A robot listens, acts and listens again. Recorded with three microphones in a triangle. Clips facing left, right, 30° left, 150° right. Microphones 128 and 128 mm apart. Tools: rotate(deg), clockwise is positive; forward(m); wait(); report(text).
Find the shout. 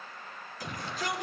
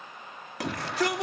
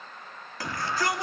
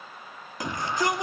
rotate(80)
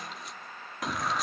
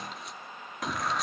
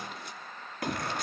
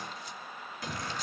report("Found it: a shout, straight ahead, 2 to 4 m away.")